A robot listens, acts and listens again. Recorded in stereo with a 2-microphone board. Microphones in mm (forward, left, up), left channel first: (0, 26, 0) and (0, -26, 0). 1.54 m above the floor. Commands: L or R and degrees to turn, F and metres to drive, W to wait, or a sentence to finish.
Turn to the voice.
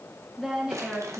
L30
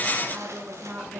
R30
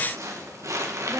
W
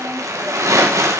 W
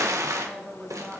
Found it: a woman speaking, straight ahead, 2 to 4 m away.